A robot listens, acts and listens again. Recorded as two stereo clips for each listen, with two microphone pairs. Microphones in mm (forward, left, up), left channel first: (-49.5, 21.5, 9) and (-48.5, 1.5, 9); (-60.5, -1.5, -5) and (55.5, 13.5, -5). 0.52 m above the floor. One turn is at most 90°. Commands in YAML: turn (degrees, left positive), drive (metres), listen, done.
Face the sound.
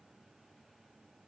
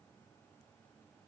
listen: true
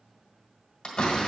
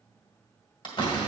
turn: 90
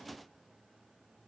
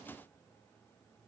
turn: 50
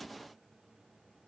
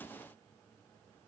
done: "Facing where the door slam came from. I can't hear it now."